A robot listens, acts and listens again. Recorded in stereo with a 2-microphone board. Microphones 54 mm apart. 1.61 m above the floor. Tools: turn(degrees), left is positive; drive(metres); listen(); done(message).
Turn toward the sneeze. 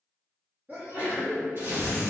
turn(degrees=-35)
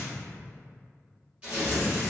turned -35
listen()
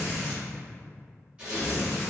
done("I heard a sneeze, but can't make it out now. It was about straight ahead or 110° right.")